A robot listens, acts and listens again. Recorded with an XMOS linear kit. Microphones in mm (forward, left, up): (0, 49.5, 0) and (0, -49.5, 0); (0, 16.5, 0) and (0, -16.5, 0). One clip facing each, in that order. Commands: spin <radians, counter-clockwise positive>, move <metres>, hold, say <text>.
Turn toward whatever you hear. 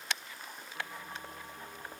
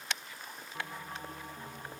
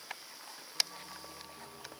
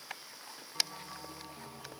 spin -0.96
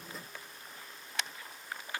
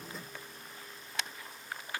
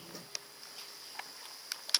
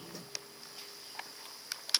hold
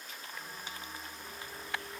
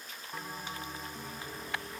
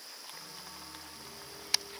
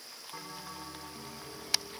spin -1.13
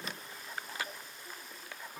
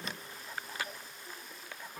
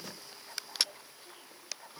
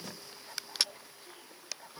spin 0.17
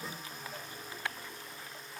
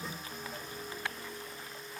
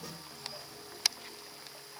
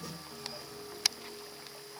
say Found it: a bell, straight ahead, over 4 m away.